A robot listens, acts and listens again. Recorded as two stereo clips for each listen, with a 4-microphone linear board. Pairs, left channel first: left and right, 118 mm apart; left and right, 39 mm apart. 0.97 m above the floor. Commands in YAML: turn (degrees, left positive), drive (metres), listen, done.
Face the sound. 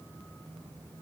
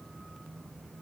listen: true
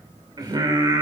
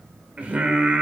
turn: -35
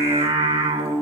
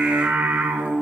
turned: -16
turn: -125
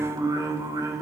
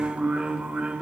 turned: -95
turn: -30
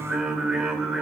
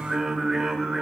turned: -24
done: "Facing the singing."